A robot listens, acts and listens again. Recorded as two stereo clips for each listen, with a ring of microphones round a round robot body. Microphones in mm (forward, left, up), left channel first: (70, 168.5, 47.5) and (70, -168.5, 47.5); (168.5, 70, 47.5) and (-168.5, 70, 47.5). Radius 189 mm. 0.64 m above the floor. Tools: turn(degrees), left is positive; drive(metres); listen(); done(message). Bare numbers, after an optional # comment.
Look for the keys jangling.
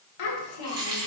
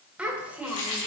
# The keys jangling: 10° right.
turn(-10)
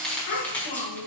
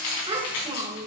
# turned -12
done("Found it: keys jangling, straight ahead, over 4 m away.")